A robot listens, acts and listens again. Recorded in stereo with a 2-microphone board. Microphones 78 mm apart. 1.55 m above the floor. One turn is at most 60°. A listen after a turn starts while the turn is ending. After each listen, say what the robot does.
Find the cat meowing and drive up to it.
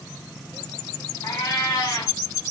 Turn 55° left.
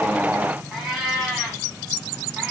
Drive 1.0 m forward.
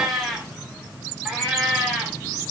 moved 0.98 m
Drive 1.0 m forward.
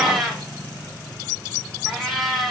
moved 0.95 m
Drive 1.0 m forward.
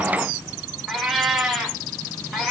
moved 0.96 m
Drive 1.0 m forward.
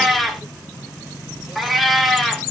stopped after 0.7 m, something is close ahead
Arrived at the cat meowing, straight ahead.